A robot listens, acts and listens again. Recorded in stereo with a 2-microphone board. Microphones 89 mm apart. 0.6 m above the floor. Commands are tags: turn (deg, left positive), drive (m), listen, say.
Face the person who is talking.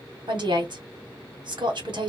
<turn deg="-60"/>
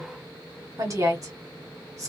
<turn deg="-45"/>
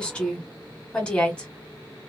<turn deg="15"/>
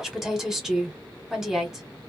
<say>Found it: a woman speaking, straight ahead.</say>